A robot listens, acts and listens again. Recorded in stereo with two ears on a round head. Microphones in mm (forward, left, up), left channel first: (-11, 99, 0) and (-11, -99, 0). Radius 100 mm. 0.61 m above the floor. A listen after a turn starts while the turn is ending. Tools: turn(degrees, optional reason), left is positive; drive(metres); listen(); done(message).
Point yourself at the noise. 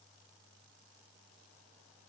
listen()
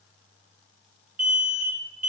turn(degrees=-35, reason="The alarm: about 35° right or 145° right.")
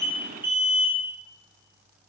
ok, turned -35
turn(degrees=-10, reason="So it is at 10° right.")
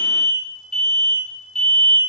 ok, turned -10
done("Facing the alarm, 1 to 2 m away.")